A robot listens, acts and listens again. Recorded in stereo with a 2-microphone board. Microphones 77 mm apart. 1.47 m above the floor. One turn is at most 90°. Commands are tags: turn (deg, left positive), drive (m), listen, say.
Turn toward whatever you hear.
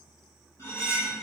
<turn deg="40"/>
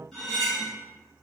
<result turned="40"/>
<say>Found it: cutlery clinking, straight ahead, 1 to 2 m away.</say>